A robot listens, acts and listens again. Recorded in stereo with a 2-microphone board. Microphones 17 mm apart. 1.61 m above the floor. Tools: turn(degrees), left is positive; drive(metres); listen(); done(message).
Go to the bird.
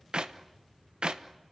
listen()
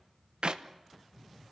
listen()
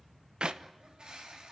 turn(degrees=-70)
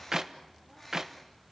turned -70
drive(metres=1.0)
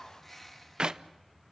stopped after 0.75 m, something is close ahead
done("Blocked. The bird is further on, straight ahead.")